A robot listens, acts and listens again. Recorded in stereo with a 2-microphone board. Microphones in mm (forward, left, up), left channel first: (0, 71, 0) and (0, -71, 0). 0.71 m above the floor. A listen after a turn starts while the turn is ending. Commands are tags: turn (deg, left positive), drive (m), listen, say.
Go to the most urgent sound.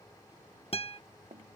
<listen/>
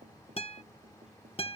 <listen/>
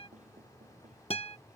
<say>I can't make out anything urgent to turn to.</say>